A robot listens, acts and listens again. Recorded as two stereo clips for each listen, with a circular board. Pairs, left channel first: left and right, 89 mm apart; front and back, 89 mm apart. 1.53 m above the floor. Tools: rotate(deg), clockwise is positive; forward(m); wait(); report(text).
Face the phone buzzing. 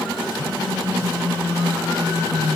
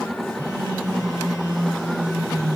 rotate(-35)
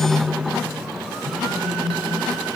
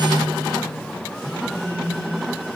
rotate(10)
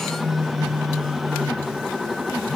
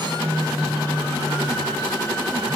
report("Found it: a phone buzzing, straight ahead, 2 to 4 m away.")